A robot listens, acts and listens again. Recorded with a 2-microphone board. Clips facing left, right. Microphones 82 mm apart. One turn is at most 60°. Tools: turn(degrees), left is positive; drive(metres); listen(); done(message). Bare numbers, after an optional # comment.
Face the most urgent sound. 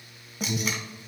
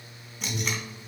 # The alarm: about 65° left or 115° left.
turn(60)
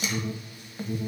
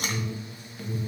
# So it is at 35° left.
turn(35)
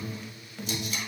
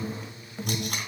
# The alarm is now 15° right.
turn(-15)
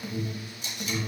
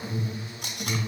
done("Found it: an alarm, straight ahead, 1 to 2 m away.")